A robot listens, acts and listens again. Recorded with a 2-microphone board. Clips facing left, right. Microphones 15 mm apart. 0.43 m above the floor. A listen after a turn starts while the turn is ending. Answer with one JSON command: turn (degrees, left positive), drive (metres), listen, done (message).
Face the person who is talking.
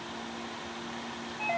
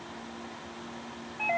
{"listen": true}
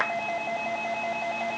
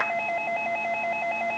{"listen": true}
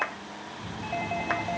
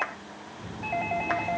{"turn": -60}
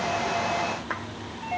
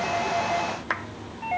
{"turn": -60}
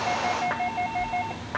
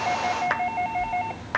{"turn": -25}
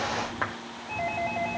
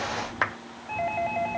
{"done": "Found it: a child speaking, straight ahead, over 4 m away."}